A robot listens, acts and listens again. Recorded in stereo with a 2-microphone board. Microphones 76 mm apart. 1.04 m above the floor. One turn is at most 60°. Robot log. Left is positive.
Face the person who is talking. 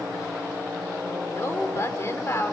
note: The woman speaking: about 40° left or 140° left.
cmd yaw +40
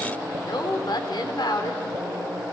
note: So it is at 105° left.
cmd yaw +60
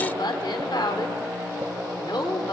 note: The woman speaking is now 80° left.
cmd yaw +60
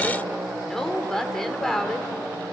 end: Found it: a woman speaking, straight ahead.